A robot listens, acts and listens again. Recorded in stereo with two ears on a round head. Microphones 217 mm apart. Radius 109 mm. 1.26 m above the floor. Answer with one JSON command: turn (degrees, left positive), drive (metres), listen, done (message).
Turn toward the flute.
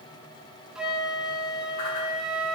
{"turn": -30}
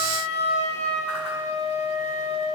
{"turn": 30}
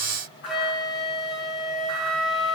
{"done": "Found it: a flute, straight ahead, 1 to 2 m away."}